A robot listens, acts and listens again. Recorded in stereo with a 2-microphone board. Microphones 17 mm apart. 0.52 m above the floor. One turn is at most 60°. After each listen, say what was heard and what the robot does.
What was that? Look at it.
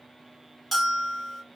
Turn 30° left.
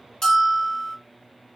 So it is at 140° left. Turn 60° left.
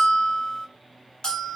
The bell is now 105° left. Turn 60° left.
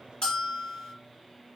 The bell is now 45° left. Turn 45° left.
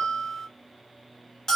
The bell is now 20° left. Turn 20° left.
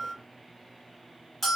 Found it: a bell, straight ahead, 1 to 2 m away.